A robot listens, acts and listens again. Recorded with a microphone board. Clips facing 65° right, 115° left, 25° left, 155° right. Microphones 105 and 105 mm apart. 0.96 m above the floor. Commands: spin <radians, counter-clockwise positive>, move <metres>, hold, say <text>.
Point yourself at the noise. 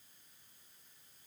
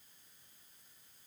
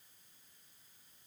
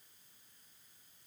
hold
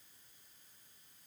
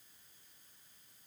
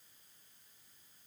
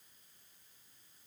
hold
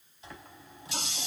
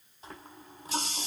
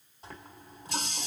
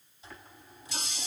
spin 1.13
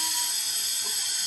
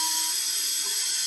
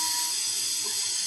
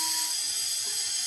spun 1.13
spin 0.35
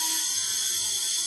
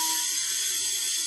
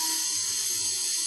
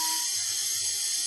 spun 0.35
say Found it: a running tap, straight ahead.